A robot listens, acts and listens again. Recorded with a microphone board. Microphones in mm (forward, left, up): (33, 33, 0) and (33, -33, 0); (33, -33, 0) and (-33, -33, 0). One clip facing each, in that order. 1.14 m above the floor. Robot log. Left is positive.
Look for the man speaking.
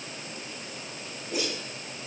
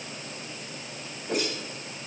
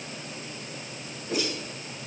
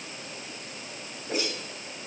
cmd idle
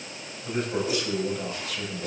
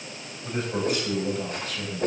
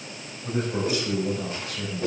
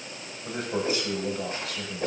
note: The man speaking: 175° left.
cmd yaw +175
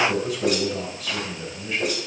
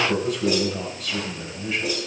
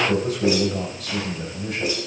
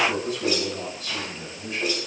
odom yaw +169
end: Facing the man speaking, over 4 m away.